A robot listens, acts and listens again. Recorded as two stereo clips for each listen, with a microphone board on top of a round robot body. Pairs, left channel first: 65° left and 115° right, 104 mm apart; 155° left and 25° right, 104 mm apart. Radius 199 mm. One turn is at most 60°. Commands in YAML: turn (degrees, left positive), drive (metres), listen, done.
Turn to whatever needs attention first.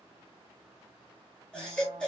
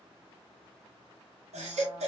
turn: -15
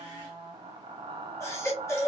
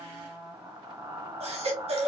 done: "Facing the baby crying."